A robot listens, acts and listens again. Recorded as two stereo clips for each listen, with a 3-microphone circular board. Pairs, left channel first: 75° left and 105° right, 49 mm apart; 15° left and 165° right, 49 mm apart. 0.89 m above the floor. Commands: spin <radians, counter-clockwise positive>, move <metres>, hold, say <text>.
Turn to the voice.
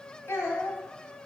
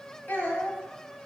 spin 1.05
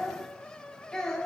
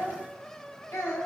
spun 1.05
say Facing the child speaking, 2 to 4 m away.